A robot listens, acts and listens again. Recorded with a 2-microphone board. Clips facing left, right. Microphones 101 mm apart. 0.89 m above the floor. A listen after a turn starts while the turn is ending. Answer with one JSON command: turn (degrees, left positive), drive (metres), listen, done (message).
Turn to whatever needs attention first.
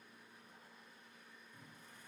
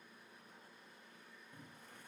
{"listen": true}
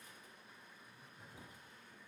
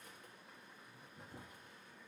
{"listen": true}
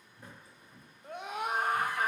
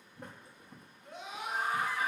{"turn": 50}
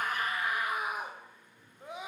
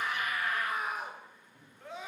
{"turn": 15}
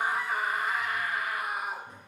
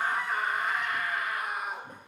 {"done": "Facing the scream, under 1 m away."}